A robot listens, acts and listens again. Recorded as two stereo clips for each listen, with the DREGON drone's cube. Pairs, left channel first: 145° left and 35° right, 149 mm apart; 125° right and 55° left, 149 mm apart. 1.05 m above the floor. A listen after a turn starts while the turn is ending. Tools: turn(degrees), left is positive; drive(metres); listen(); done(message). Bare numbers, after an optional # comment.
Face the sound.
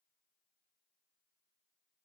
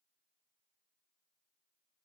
listen()
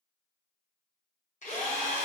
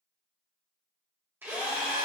# The drill: 130° left.
turn(130)
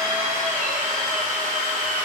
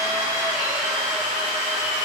# The drill is now 30° right.
turn(-30)
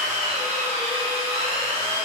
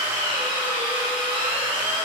done("Facing the drill, 1 to 2 m away.")